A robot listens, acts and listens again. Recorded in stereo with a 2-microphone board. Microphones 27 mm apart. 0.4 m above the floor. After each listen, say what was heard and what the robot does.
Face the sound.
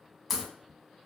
Turn 30° left.
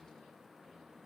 Keep listening.
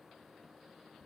I heard a crack, but can't make it out now. It was about 30° right or 150° left.